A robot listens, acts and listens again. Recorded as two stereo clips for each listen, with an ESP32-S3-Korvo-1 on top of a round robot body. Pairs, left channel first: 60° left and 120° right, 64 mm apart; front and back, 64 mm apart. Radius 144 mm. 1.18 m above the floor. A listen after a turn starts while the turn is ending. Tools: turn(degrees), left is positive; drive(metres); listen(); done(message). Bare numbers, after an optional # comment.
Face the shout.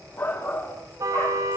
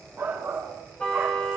# The shout: 115° left.
turn(115)
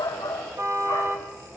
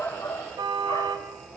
listen()
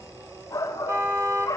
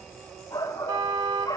# The shout is now 25° left.
turn(25)
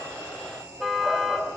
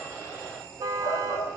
listen()
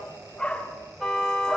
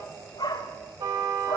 # The shout is now 15° right.
turn(-15)
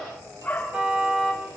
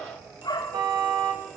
done("Facing the shout.")